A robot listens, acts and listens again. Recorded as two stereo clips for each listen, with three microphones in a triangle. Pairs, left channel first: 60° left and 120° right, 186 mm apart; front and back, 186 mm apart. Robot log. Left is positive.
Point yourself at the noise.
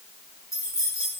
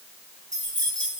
note: The keys jangling: 135° left.
cmd yaw +135
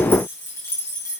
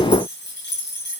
note: The keys jangling is now 15° right.
cmd yaw -15
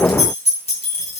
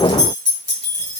end: Facing the keys jangling.